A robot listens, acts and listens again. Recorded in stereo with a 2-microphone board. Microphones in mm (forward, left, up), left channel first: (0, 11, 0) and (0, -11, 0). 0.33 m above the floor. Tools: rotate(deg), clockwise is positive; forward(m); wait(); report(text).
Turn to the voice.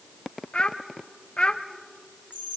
rotate(-50)
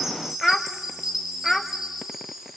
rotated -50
rotate(-15)
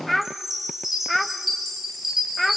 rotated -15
report("Found it: a child speaking, straight ahead, under 1 m away.")